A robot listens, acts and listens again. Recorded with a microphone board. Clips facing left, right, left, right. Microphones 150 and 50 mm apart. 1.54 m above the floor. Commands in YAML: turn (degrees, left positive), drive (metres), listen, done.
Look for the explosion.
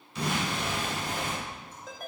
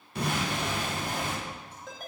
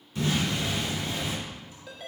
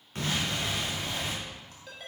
turn: -55
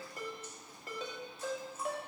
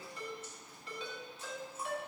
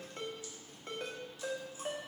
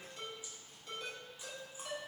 listen: true
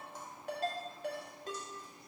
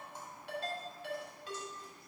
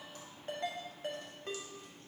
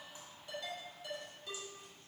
done: "I heard an explosion, but can't make it out now. It was about straight ahead or 70° right."